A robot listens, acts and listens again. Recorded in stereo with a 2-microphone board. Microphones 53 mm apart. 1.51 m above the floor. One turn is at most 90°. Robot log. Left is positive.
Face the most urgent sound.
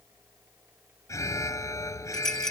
note: The alarm: about 70° left or 110° left.
cmd yaw +70
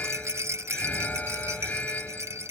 note: So it is at 35° left.
cmd yaw +35
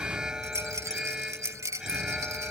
note: The alarm is now 10° right.
cmd yaw -10
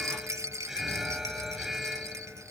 end: Facing the alarm.